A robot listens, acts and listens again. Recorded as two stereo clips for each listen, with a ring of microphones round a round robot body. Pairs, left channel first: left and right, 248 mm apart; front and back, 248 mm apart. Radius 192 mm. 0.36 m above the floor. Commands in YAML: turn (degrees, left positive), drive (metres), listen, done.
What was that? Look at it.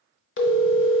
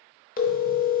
turn: 55
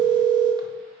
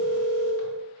turn: -15
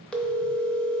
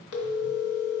done: "Found it: a phone ringing, straight ahead."